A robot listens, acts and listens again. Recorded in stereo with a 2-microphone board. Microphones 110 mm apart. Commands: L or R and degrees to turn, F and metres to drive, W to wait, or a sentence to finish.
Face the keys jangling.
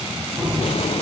R35
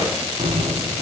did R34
R105
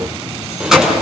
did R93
Found it: keys jangling, straight ahead, over 4 m away.